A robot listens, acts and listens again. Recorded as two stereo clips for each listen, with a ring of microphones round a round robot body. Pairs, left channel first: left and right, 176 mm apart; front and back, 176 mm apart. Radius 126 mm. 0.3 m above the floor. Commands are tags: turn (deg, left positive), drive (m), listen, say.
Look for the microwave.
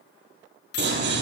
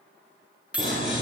<turn deg="100"/>
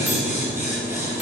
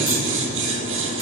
<listen/>
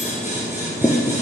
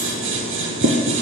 <listen/>
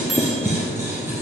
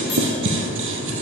<say>I heard a microwave from this way, but can't make it out now.</say>